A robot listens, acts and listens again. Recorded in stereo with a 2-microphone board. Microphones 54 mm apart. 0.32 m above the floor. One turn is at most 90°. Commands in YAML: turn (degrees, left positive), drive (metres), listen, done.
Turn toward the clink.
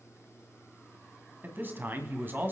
listen: true
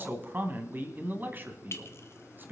turn: 50
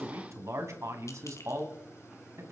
listen: true
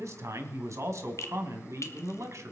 turn: 75
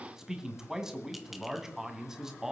listen: true
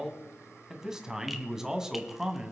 listen: true
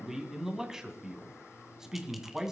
done: "I heard a clink from this way, but can't make it out now."